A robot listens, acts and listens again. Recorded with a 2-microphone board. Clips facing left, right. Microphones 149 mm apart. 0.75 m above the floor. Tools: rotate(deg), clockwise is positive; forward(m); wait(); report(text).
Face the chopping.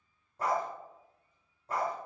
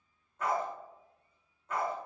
wait()
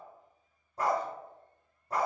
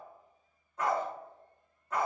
wait()
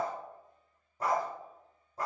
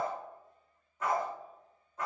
report("I can't make out chopping, only a dog barking.")